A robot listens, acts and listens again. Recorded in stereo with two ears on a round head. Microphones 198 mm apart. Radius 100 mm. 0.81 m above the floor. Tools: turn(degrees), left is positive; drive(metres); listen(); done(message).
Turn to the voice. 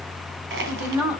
turn(degrees=-30)
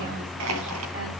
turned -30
listen()
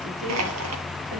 listen()
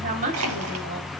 turn(degrees=-140)
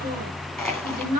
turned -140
turn(degrees=-45)
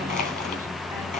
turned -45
listen()
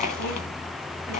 listen()
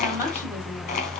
done("I heard a woman speaking from this way, but can't make it out now.")